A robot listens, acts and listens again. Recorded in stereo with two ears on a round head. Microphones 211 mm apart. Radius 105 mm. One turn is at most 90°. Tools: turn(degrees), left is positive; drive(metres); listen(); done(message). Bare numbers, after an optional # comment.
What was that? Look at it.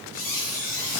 # The squeak: about 60° left or 120° left.
turn(60)
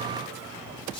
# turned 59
# So it is at 25° left.
turn(25)
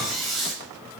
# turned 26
done("Facing the squeak.")